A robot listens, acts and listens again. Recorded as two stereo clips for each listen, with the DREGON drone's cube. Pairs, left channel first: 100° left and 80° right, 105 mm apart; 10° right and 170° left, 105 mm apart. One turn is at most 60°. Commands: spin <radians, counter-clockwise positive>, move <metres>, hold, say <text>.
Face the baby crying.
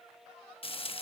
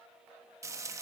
hold
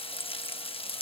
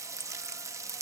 hold
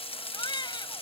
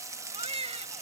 spin 1.05
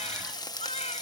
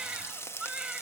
spin 1.05
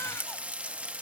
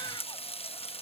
spin 0.52
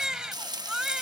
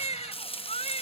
say Found it: a baby crying, straight ahead.